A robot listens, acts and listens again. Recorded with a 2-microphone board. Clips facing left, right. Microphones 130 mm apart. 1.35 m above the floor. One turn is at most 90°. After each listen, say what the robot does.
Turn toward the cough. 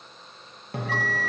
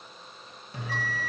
Keep listening.
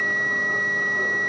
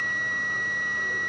Keep listening.
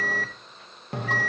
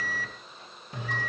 I can't make out a cough to turn to.